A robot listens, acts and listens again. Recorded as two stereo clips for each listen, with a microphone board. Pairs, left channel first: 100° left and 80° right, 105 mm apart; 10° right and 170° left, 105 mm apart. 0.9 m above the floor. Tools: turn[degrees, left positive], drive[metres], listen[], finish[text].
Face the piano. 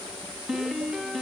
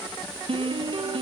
Thought: The piano: 165° right.
Action: turn[-165]
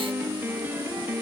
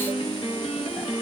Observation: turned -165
Thought: The piano is now 10° right.
Action: turn[-10]
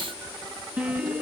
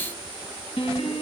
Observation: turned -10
Action: finish[Found it: a piano, straight ahead.]